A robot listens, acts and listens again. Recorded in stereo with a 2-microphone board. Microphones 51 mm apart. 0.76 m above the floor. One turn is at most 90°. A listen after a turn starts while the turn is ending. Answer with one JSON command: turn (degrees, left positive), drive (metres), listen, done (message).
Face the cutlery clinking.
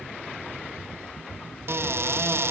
{"listen": true}
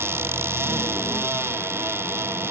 {"listen": true}
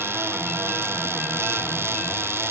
{"done": "I can't make out cutlery clinking to turn to."}